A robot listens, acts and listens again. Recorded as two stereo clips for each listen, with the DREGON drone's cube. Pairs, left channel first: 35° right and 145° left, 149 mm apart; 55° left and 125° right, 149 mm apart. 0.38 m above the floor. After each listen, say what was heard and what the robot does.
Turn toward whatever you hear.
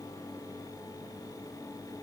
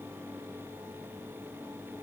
Keep listening.
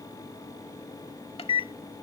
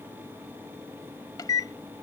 Found it: a microwave, straight ahead.